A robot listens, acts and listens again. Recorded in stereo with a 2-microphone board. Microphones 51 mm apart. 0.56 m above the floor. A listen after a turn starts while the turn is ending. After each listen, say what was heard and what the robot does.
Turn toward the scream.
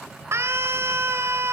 The scream: about 55° right or 125° right. Turn 55° right.
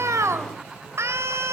So it is at 65° right. Turn 65° right.
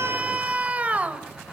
The scream is now 30° right. Turn 30° right.
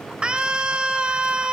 The scream is now 20° right. Turn 20° right.
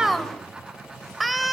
Facing the scream.